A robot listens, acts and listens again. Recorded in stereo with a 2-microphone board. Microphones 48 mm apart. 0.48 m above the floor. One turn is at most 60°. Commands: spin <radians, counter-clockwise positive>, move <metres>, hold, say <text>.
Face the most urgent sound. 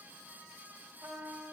hold
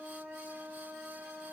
hold
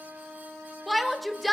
spin 0.52
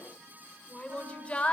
spin 1.05
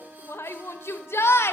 spin 1.05
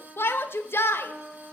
spin 1.05
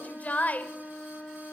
spin 0.70
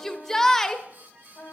spin 0.17
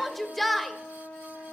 say Found it: a shout, straight ahead, 1 to 2 m away.